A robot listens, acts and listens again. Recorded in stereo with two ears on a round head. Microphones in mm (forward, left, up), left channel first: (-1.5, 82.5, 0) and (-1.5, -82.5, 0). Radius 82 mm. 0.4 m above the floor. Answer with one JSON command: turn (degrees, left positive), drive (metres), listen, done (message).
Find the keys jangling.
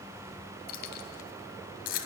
{"turn": 50}
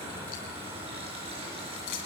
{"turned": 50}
{"turn": 75}
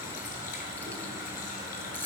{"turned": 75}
{"turn": 10}
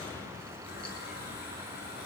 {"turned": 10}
{"listen": true}
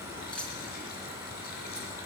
{"done": "Facing the keys jangling."}